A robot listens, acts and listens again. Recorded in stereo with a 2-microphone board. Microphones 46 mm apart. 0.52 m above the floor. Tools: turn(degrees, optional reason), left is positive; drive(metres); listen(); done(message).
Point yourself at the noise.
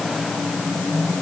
listen()
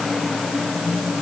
listen()
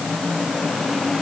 done("I can't make out anything.")